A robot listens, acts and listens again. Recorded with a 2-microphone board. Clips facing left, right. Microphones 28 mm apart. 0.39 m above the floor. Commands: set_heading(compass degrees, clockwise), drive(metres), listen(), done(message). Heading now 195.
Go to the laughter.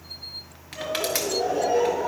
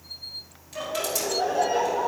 set_heading(250)
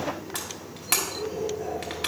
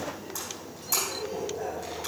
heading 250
set_heading(315)
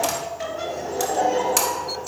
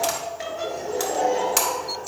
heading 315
set_heading(305)
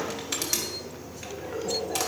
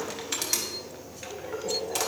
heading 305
drive(1.0)
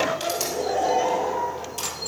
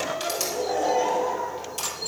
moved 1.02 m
drive(1.0)
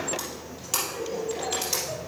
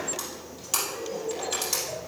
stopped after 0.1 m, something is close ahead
done("Arrived at the laughter, straight ahead.")